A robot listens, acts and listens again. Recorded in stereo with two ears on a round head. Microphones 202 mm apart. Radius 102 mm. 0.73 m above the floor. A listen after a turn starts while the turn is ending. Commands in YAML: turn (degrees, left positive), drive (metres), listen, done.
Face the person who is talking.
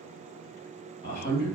turn: 40
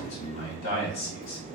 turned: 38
turn: 95
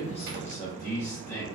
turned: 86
turn: 10
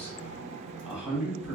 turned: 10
done: "Facing the man speaking."